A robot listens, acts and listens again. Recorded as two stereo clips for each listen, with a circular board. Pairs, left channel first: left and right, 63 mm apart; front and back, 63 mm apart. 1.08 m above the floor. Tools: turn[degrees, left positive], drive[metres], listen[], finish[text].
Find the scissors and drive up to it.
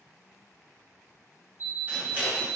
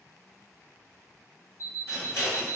Thought: The scissors: 35° right.
Action: turn[-35]
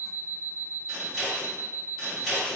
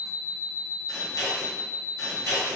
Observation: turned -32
Action: drive[1.0]
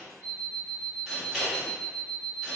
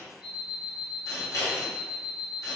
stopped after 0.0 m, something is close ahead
Action: finish[Something is in my way. I am facing the scissors but have not reached it.]